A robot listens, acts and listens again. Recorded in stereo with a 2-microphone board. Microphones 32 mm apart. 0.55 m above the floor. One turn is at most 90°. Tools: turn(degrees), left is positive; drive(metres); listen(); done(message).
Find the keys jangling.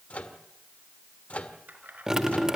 turn(degrees=-65)
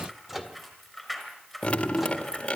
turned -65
done("Facing the keys jangling, over 4 m away.")